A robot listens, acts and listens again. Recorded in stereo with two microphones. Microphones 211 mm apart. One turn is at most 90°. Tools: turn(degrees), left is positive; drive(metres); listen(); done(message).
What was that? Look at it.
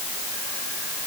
listen()
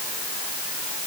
listen()
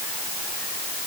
done("I can't make out anything.")